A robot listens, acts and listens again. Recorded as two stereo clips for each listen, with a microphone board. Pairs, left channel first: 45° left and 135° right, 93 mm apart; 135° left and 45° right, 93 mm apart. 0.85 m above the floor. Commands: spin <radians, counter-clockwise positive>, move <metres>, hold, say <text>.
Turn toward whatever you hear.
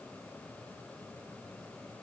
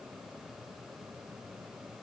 hold
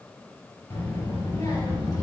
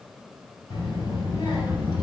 spin 1.66
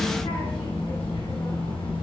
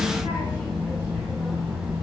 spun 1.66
spin 0.44
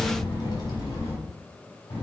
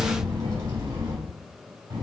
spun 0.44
say Found it: a child speaking, straight ahead, over 4 m away.